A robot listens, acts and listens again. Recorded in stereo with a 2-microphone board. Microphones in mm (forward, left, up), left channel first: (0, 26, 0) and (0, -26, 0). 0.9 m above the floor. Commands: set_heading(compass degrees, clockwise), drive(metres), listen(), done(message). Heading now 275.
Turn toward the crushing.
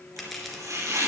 set_heading(245)
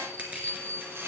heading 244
set_heading(274)
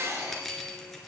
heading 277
listen()
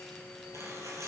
listen()
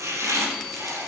done("I heard crushing from this way, but can't make it out now.")